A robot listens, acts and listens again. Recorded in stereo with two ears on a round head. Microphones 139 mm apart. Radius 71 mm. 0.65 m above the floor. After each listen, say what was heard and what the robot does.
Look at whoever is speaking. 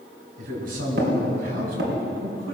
The man speaking: about 65° right or 115° right. Turn 65° right.
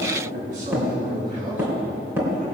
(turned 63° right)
So it is at 50° right. Turn 50° right.
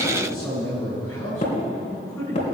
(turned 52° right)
Facing the man speaking, over 4 m away.